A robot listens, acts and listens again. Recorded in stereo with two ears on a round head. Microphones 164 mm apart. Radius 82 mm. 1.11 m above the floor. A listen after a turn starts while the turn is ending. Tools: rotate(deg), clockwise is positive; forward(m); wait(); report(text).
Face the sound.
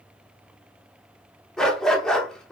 rotate(-30)
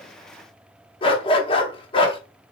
rotate(-145)
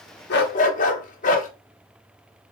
rotate(-50)
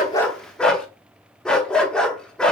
report("Facing the dog barking, under 1 m away.")